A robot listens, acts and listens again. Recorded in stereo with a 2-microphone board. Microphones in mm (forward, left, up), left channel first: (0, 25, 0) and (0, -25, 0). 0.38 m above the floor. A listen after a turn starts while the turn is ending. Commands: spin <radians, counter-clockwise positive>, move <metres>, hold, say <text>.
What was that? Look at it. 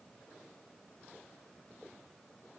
hold
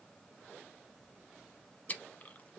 spin 0.52
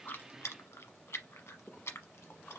spin 2.01
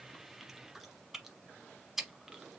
say Found it: chewing, straight ahead, under 1 m away.